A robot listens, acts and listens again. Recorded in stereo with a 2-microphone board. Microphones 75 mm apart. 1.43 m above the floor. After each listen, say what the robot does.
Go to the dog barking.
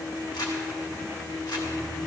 Keep listening.
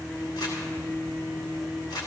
Keep listening.
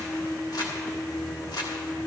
I can't make out a dog barking to turn to.